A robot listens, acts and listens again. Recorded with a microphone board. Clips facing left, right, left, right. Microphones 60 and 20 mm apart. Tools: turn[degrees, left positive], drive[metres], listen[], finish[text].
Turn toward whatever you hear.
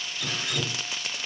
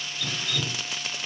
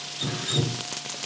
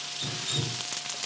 Thought: The dripping: about 20° left or 160° left.
Action: turn[20]
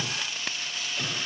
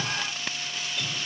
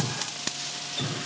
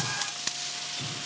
Thought: So it is at 140° left.
Action: turn[140]
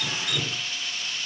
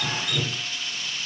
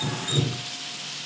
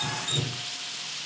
Action: finish[Facing the dripping, 1 to 2 m away.]